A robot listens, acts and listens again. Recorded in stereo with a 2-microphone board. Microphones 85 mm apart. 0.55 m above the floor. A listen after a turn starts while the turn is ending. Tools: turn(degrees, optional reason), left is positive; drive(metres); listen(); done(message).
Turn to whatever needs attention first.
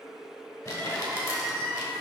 turn(degrees=30)
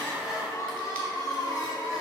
turn(degrees=135, reason="So it is at 135° left.")
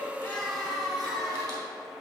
done("Found it: crying, straight ahead.")